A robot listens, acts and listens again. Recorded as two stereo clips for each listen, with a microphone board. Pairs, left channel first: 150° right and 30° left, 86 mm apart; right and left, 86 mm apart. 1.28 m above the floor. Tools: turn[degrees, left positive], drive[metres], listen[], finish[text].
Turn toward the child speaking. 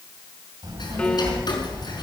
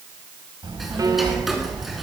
Thought: The child speaking: 55° left.
Action: turn[55]
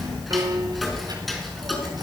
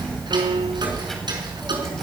Action: finish[Facing the child speaking.]